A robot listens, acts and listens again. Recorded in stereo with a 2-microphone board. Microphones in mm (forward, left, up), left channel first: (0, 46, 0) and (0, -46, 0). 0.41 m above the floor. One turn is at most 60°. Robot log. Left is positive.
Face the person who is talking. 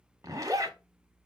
cmd idle
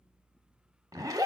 cmd idle
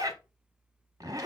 end: I can't make out anyone speaking to turn to.